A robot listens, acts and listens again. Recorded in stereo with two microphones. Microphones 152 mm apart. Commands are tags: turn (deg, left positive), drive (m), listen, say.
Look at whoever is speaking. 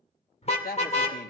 <turn deg="90"/>
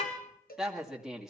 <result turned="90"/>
<say>Facing the woman speaking, 2 to 4 m away.</say>